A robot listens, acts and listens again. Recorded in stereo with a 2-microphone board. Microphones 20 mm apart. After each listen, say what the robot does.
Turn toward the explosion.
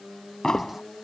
Turn 30° left.
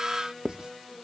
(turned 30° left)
Keep listening.
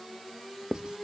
I heard an explosion, but can't make it out now. It was about straight ahead or 120° left.